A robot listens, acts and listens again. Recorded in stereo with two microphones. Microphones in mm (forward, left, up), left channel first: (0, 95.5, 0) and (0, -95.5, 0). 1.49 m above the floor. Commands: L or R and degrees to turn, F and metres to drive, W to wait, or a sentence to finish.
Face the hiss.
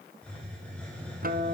L30
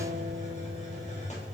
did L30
L145
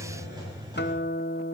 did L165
R20
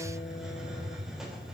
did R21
Found it: a hiss, straight ahead.